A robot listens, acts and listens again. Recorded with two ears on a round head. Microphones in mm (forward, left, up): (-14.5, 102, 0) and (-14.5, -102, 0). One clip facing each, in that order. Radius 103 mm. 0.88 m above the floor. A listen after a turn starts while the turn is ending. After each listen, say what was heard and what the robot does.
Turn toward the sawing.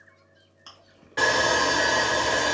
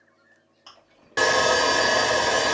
The sawing: about 55° right or 125° right. Turn 55° right.
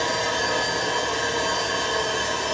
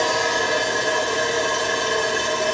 So it is at 60° right. Turn 60° right.
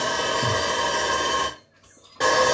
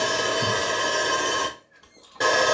Found it: sawing, straight ahead, under 1 m away.